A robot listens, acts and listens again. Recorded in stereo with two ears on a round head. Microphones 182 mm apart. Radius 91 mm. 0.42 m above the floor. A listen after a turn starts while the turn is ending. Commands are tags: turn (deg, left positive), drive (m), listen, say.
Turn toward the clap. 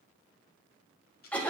<listen/>
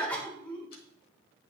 <listen/>
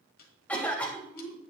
<say>I can't make out a clap to turn to.</say>